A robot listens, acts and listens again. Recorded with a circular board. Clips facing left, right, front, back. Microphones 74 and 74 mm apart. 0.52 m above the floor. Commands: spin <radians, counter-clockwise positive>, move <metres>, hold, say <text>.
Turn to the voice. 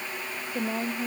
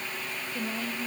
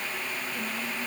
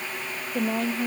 spin 2.62
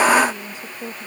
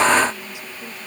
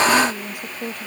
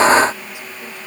spin 0.70
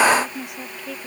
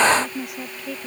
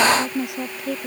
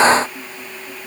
say Found it: a woman speaking, straight ahead.